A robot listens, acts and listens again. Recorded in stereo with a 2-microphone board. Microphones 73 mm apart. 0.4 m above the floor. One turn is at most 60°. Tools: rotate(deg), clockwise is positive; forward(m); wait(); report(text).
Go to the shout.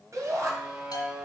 rotate(50)
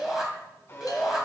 forward(1.0)
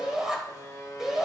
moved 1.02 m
rotate(10)
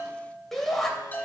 forward(1.0)
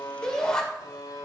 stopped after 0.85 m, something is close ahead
rotate(-15)
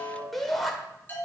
report("I am next to the shout.")